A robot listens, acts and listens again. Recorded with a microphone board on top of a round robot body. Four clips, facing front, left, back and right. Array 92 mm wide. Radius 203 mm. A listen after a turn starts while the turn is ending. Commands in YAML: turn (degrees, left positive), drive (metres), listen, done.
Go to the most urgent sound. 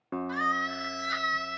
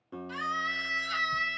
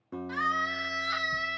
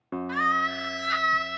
turn: -85
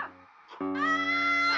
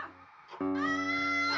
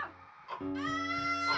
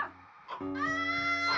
drive: 1.0
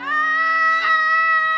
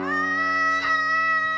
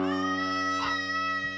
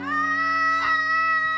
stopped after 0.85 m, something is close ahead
done: "I am next to the scream."